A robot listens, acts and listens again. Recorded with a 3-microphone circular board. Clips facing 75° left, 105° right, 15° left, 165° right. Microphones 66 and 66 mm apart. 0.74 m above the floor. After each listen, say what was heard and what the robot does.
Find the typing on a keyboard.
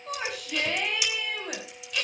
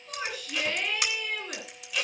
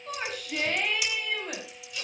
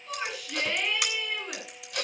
The typing on a keyboard: 140° right. Turn 140° right.
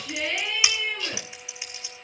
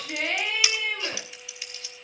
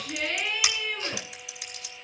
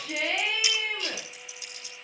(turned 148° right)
Found it: typing on a keyboard, straight ahead, 2 to 4 m away.